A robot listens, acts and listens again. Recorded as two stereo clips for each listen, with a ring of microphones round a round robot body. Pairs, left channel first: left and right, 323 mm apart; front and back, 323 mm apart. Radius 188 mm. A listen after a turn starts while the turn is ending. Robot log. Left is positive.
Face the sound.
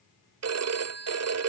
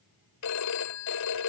note: The phone ringing: 45° right.
cmd yaw -45
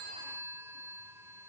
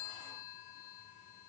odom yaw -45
note: The phone ringing is now 10° right.
cmd yaw -10
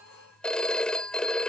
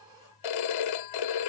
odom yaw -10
end: Facing the phone ringing.